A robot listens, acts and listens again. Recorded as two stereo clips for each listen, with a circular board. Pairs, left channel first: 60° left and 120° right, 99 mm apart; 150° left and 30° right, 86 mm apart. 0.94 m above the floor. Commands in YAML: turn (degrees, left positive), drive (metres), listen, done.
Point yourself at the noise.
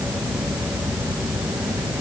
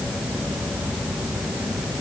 listen: true
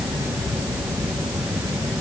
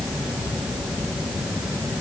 listen: true
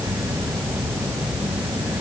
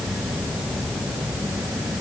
done: "I can't make out anything."